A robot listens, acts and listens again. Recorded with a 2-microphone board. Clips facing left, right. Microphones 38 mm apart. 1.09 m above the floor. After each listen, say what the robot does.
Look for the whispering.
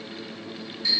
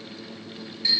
Keep listening.
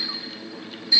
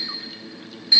Keep listening.
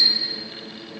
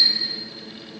I can't make out whispering, only a clink.